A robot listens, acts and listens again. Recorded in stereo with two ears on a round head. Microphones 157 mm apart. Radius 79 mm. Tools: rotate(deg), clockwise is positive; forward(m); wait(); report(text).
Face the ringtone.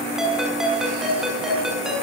rotate(30)
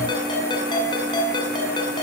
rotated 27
rotate(-25)
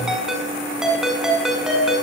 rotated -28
report("Found it: a ringtone, straight ahead.")